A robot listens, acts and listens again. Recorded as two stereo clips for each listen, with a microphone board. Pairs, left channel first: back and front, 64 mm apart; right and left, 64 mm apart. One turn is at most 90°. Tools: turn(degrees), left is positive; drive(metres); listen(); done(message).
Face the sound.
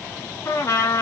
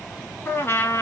turn(degrees=-90)
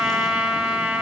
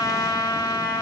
turn(degrees=-75)
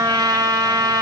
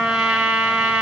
turn(degrees=10)
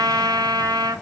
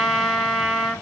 done("Facing the trumpet, under 1 m away.")